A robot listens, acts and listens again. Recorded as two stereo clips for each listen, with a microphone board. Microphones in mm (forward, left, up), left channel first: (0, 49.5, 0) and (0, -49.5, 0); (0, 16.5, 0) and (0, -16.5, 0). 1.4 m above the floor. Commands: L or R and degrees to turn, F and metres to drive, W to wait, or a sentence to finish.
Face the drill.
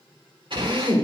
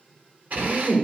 R55
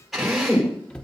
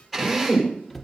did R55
Found it: a drill, straight ahead, over 4 m away.